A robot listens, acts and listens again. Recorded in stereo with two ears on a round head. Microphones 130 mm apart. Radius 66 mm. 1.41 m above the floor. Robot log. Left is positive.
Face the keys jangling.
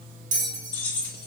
cmd yaw +30
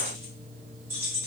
note: So it is at 20° right.
cmd yaw -20
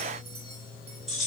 end: Found it: keys jangling, straight ahead, 2 to 4 m away.